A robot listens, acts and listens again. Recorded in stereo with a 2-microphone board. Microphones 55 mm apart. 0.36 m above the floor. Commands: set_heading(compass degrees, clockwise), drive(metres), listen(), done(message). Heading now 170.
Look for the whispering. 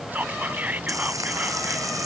set_heading(200)
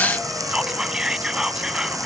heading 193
set_heading(208)
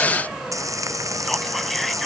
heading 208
listen()
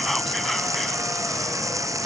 listen()
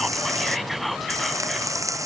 done("Facing the whispering.")